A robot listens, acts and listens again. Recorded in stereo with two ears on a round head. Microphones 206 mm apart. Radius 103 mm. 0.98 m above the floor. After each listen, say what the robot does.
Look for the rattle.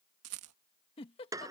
Turn 65° right.
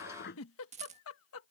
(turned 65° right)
Turn 30° right.
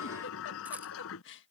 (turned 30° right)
Keep listening.
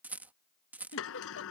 Turn 10° right.
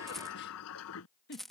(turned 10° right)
Found it: a rattle, straight ahead.